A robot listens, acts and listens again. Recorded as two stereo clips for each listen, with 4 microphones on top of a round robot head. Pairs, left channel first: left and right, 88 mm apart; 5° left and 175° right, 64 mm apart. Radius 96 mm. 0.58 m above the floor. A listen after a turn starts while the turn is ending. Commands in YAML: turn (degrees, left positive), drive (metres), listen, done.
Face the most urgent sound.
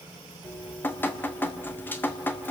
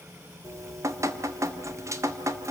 listen: true
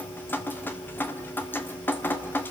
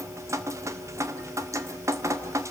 listen: true
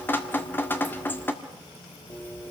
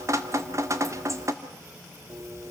done: "I can't make out anything urgent, only dripping."